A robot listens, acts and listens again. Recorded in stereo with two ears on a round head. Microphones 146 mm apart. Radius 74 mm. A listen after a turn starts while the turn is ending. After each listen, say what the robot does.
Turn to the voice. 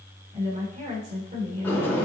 Turn 45° right.
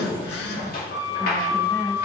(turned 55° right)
Keep listening.
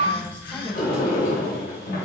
Keep listening.
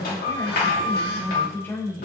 Turn 10° left.
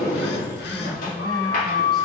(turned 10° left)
Keep listening.
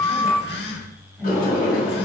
Found it: a woman speaking, straight ahead.